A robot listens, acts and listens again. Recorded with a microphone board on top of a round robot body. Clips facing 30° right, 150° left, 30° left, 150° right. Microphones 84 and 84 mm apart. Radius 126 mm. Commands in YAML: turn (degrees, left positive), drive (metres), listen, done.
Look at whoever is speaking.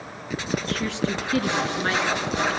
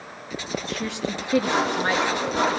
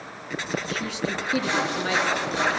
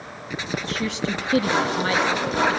turn: -135
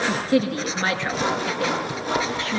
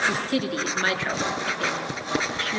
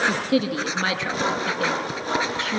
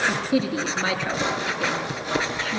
turn: 30
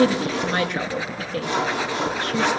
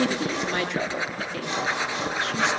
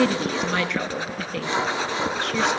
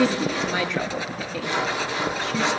turn: 10
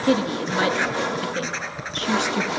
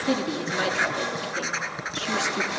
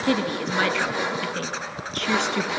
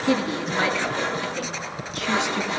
done: "Facing the woman speaking, over 4 m away."